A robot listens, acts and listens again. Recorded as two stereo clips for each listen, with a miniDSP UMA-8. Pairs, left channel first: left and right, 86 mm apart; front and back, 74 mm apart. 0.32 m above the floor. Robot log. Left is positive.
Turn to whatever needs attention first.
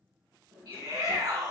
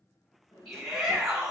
note: The shout: 90° right.
cmd yaw -90
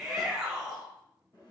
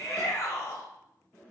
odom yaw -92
end: Facing the shout, 1 to 2 m away.